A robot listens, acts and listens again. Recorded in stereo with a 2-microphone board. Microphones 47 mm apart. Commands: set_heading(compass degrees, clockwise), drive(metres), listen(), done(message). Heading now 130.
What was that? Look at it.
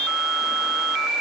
listen()
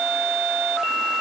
listen()
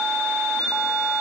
done("I can't make out anything to turn to.")